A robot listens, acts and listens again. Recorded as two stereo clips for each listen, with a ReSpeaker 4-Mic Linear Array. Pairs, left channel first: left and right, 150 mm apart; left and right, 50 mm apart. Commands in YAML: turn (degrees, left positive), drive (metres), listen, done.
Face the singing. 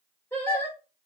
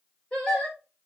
turn: 15
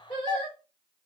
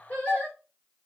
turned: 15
turn: 150
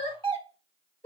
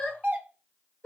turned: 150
turn: 45
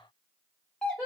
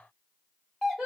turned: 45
done: "Facing the singing, 1 to 2 m away."